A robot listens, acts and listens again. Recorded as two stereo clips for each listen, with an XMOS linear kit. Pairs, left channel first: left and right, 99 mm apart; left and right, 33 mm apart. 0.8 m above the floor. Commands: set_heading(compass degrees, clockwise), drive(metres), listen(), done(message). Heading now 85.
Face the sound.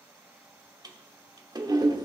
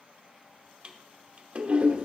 set_heading(125)
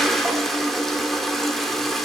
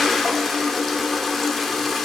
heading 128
done("Found it: a toilet flushing, straight ahead, under 1 m away.")